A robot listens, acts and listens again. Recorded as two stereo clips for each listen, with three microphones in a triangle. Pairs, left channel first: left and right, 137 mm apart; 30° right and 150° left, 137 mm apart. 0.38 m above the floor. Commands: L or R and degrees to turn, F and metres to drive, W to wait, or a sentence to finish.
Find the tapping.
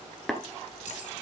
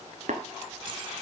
L180
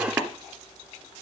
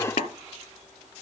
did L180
R10
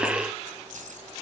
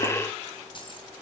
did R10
W
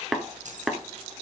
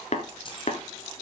Found it: tapping, straight ahead.